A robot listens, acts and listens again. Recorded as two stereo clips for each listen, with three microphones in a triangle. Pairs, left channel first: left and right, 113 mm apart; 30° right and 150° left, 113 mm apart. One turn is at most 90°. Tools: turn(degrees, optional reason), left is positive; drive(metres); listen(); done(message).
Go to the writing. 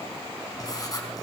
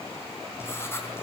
turn(degrees=35, reason="The writing: 35° left.")
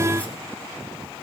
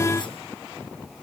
listen()
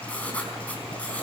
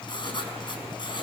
turn(degrees=15, reason="The writing is now 15° left.")
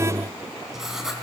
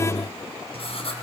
drive(metres=1.0)
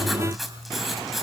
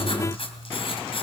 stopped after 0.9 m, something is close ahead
done("Blocked. The writing is further on, straight ahead.")